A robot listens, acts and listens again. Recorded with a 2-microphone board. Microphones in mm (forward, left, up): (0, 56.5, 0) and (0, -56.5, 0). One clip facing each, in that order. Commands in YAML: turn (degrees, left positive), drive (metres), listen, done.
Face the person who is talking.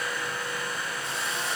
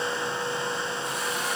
listen: true
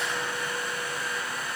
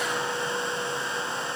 listen: true
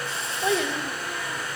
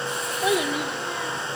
turn: -30
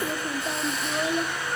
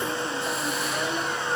turn: 20
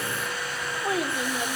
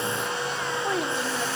done: "Found it: a child speaking, straight ahead."